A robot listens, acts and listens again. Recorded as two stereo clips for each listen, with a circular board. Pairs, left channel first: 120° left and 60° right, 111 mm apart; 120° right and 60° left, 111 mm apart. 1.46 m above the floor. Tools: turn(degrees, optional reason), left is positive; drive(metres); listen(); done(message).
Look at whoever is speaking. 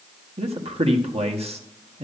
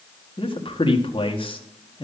turn(degrees=-80, reason="The man speaking: 80° right.")
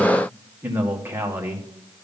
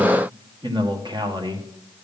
turn(degrees=10, reason="The man speaking is now 10° left.")
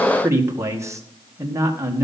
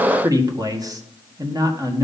done("Found it: a man speaking, straight ahead, 1 to 2 m away.")